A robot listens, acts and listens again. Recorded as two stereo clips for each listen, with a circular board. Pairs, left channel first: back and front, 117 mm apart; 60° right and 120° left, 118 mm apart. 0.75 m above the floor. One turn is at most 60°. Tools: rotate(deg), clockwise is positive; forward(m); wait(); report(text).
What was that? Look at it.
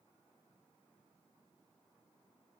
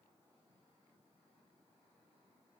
wait()
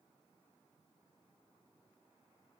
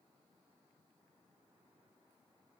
wait()
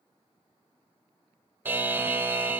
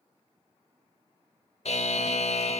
rotate(60)
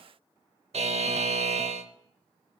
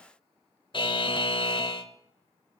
rotate(20)
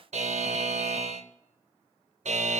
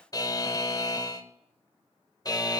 report("Found it: a buzzer, straight ahead.")